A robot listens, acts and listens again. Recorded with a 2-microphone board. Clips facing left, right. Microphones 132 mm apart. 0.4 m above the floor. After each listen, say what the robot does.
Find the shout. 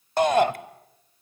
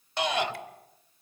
Turn 45° left.
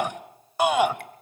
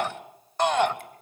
Turn 10° left.
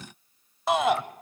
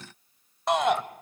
Facing the shout.